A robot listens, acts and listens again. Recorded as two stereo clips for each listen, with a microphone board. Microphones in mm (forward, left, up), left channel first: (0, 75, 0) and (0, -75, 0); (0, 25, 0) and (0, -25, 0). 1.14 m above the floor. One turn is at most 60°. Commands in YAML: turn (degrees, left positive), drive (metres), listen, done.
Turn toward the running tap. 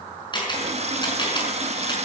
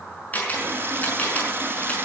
turn: -45
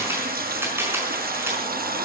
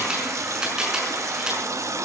turn: -60
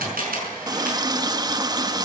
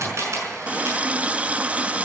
turn: -25
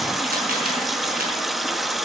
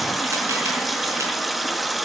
done: "Found it: a running tap, straight ahead."